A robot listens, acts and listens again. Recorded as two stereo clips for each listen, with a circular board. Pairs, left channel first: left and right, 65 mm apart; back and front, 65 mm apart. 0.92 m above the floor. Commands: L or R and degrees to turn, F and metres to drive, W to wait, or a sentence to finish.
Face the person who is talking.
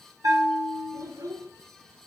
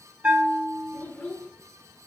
R120
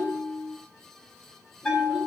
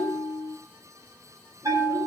W
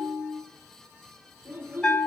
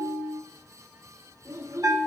R30
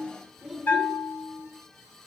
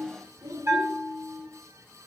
R10
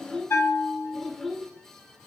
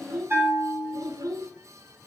Found it: a child speaking, straight ahead.